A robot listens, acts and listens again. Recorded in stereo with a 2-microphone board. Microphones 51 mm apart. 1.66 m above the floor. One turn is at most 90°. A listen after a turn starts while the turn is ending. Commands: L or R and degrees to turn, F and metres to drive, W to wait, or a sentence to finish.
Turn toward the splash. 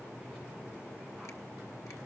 W
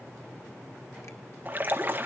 R35
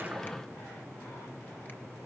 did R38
W
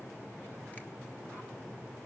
I heard a splash, but can't make it out now. It was about straight ahead or 105° right.